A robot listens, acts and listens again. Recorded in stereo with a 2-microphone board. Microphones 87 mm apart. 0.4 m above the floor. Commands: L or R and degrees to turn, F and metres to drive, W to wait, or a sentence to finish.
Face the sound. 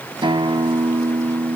R65
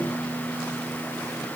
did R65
Found it: a guitar, straight ahead, 1 to 2 m away.